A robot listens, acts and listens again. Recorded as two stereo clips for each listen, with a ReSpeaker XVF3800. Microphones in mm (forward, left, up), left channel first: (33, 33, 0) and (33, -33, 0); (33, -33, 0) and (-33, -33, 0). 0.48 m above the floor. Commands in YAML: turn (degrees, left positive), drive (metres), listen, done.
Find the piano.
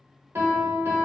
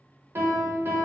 turn: -135
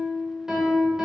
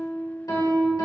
turn: -10
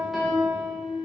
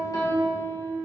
done: "Facing the piano, 1 to 2 m away."